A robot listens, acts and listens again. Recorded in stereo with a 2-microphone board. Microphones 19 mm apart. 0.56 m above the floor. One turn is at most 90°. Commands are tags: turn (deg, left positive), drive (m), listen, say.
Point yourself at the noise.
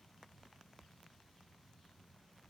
<listen/>
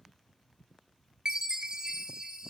<turn deg="-40"/>
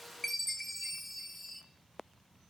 <say>Found it: a chime, straight ahead, 1 to 2 m away.</say>